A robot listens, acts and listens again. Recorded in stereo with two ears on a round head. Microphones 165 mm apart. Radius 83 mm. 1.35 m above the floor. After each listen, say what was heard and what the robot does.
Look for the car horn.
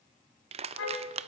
Turn 90° left.
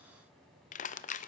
Keep listening.
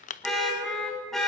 Found it: a car horn, straight ahead.